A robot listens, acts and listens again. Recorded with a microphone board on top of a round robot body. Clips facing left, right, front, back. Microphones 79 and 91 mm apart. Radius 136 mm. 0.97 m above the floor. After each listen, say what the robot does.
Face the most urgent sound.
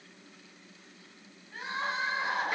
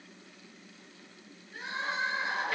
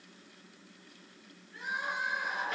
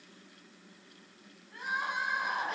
Turn 140° left.
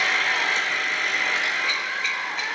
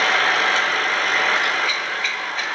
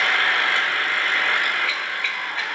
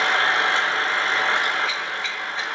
Keep listening.
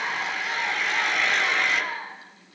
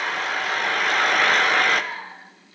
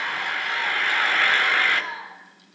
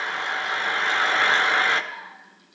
Turn 10° left.
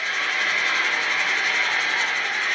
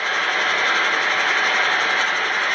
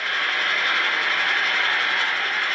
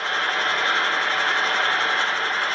Keep listening.
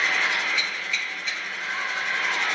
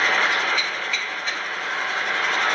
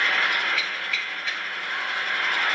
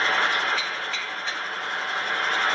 Keep listening.
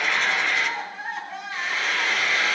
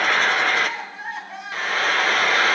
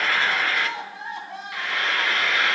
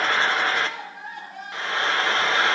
Facing the crying, 2 to 4 m away.